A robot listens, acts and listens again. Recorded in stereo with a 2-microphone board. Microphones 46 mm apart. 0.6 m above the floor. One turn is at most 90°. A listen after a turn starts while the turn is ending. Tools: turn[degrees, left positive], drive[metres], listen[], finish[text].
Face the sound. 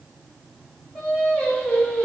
Thought: The singing: about 35° left or 145° left.
Action: turn[35]
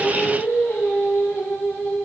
Thought: So it is at 100° left.
Action: turn[90]
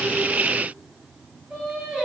Thought: The singing is now 15° right.
Action: turn[-15]
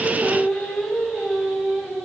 Thought: The singing is now 10° right.
Action: turn[-10]
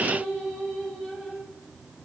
Action: finish[Facing the singing.]